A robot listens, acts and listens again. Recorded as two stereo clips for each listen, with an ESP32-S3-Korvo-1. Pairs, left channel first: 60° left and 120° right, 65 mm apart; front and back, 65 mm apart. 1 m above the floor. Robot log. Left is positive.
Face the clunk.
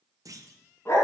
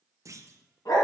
note: The clunk: 145° right.
cmd yaw -145
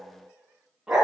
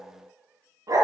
end: I heard a clunk from this way, but can't make it out now.